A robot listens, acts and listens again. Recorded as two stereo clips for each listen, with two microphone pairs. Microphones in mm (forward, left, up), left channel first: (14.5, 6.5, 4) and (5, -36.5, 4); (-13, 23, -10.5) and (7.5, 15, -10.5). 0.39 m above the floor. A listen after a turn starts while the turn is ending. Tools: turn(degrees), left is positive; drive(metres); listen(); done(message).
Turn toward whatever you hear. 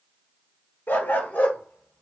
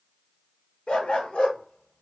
turn(degrees=125)
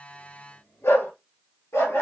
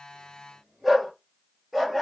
turn(degrees=70)
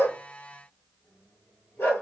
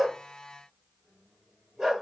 turn(degrees=45)
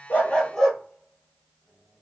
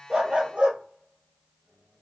done("Found it: a dog barking, straight ahead, 2 to 4 m away.")